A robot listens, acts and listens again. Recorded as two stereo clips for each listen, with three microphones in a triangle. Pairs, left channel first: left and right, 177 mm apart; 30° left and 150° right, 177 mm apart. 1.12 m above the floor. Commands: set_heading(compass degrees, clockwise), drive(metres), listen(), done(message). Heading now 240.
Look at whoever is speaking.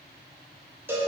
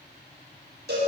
listen()
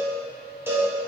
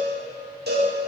listen()
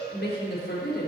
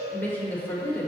set_heading(130)
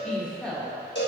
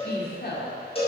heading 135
done("Facing the woman speaking.")